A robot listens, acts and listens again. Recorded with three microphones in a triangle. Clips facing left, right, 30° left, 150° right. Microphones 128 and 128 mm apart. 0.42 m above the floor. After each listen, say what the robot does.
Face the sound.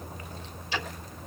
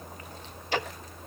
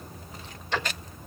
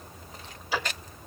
Turn 70° right.
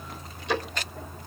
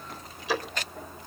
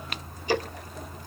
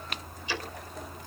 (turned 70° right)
Found it: ticking, straight ahead, under 1 m away.